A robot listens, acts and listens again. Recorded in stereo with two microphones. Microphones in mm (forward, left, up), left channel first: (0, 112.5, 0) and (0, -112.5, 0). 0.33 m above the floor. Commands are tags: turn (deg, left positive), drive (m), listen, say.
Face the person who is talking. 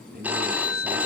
<turn deg="-50"/>
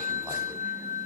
<listen/>
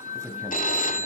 <turn deg="-10"/>
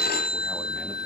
<listen/>
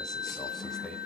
<say>Facing the man speaking, 1 to 2 m away.</say>